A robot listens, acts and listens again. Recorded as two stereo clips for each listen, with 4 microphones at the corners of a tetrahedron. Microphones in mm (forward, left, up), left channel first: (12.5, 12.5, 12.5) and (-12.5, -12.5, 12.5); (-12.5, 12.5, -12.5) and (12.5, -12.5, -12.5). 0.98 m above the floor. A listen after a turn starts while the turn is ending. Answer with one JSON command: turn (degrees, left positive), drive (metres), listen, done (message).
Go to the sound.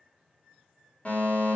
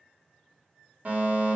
{"drive": 1.0}
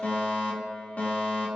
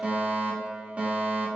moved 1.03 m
{"drive": 1.0}
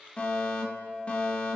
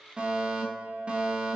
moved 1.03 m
{"drive": 1.0}
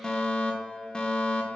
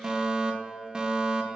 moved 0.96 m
{"drive": 1.0}
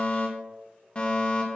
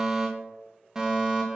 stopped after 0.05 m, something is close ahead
{"turn": 15}
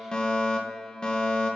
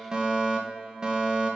{"done": "Arrived at the fire alarm, straight ahead."}